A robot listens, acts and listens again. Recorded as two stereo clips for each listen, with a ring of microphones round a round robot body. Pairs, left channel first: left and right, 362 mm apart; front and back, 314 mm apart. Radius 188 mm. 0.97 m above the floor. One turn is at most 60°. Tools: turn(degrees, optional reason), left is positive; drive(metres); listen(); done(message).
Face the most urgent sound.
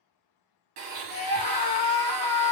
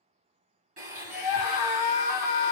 turn(degrees=20, reason="The scream: 20° left.")
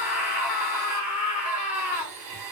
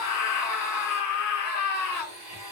done("Facing the scream.")